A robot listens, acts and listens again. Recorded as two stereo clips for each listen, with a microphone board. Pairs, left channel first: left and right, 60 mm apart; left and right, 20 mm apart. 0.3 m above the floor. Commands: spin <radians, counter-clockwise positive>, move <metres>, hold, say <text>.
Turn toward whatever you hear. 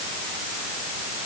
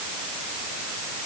hold
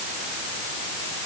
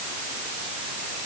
hold
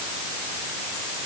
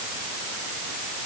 say I can't make out anything.